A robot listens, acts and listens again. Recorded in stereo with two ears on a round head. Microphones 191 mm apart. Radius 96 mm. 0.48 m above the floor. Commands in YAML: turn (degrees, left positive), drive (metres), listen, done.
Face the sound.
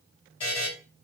turn: 25
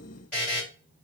done: "Found it: a buzzer, straight ahead."